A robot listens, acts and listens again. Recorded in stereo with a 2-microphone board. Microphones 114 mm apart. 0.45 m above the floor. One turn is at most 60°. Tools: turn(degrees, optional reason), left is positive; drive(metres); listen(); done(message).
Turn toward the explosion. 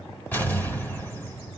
turn(degrees=15, reason="The explosion: about 15° left or 165° left.")
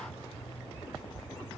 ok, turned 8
listen()
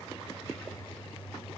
done("I heard an explosion, but can't make it out now. It was about 10° left or 155° left.")